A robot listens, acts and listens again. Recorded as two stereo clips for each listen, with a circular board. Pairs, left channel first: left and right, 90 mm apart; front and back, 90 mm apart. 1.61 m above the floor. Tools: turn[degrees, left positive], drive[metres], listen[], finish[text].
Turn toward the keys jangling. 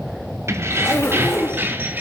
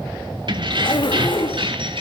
Thought: The keys jangling: 160° right.
Action: turn[-160]
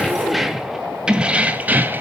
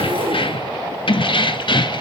Thought: The keys jangling is now 25° right.
Action: turn[-25]
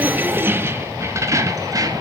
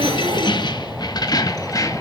Thought: The keys jangling is now 45° right.
Action: turn[-45]
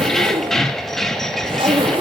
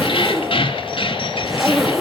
Action: finish[Facing the keys jangling.]